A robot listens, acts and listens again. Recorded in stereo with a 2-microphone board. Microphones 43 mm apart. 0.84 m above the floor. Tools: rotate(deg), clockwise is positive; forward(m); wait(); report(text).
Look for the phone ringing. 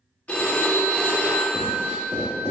rotate(-35)
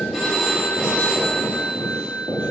report("Facing the phone ringing.")